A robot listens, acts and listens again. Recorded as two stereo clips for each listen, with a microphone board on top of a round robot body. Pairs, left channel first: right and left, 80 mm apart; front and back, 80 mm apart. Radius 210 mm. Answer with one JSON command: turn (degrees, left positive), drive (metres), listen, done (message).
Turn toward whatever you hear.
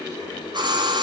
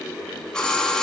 {"turn": 80}
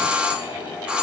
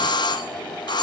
{"turn": 15}
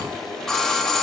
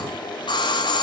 {"done": "Facing the doorbell."}